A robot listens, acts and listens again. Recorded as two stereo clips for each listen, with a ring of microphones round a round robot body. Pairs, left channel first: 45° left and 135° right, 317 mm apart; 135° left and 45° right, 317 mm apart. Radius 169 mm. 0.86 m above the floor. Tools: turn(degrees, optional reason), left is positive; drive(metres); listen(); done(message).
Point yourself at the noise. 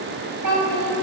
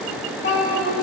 turn(degrees=-160, reason="The child speaking: 160° right.")
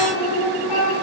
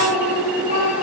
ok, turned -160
turn(degrees=30, reason="The child speaking is now 30° left.")
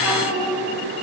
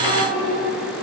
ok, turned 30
done("Facing the child speaking, 2 to 4 m away.")